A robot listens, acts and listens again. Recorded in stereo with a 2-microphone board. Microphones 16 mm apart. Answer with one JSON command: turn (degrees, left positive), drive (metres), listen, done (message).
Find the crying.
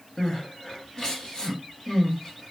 {"turn": 50}
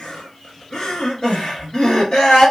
{"turn": 75}
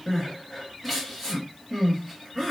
{"done": "Facing the crying, 1 to 2 m away."}